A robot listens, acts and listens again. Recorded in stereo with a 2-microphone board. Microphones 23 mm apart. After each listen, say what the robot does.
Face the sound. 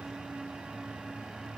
Keep listening.
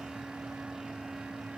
Keep listening.
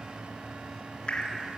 Turn 50° left.
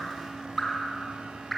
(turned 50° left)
Facing the dripping.